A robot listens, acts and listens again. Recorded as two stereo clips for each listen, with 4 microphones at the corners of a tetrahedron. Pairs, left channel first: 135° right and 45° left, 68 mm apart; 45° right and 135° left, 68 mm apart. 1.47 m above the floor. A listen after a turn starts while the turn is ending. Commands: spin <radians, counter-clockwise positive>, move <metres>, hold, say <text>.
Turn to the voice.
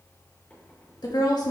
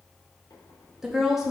spin -2.44
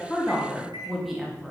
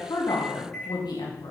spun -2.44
spin -0.70
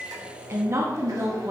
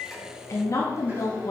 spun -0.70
say Facing the woman speaking.